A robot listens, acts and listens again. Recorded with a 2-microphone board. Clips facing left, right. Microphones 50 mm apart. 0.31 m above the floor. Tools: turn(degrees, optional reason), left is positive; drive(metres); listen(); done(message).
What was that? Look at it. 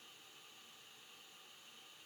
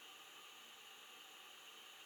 listen()
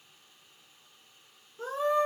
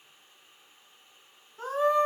turn(degrees=-55, reason="The scream: about 55° right or 125° right.")
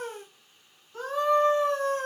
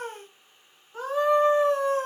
turn(degrees=-20, reason="So it is at 20° right.")
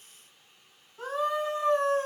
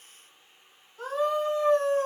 done("Facing the scream, 2 to 4 m away.")